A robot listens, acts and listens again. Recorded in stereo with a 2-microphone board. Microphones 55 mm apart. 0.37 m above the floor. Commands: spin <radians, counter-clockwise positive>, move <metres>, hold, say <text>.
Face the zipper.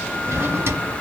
hold
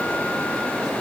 hold
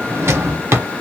say I can't make out a zipper to turn to.